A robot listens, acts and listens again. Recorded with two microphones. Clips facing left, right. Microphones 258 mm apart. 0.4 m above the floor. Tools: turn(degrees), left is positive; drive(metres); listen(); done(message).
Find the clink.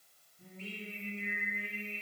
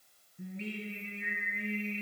listen()
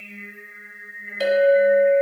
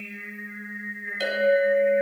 turn(degrees=65)
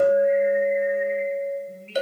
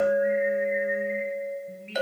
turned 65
turn(degrees=40)
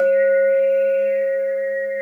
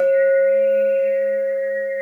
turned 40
turn(degrees=20)
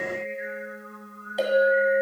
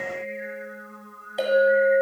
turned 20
done("Facing the clink.")